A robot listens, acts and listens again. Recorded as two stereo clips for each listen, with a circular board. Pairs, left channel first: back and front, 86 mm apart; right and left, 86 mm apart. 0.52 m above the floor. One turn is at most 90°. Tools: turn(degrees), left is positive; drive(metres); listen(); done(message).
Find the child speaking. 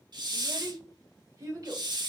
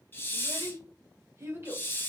turn(degrees=35)
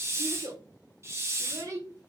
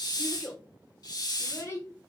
turn(degrees=-40)
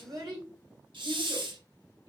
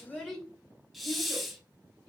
turn(degrees=-20)
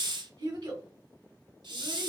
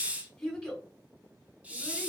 done("Facing the child speaking.")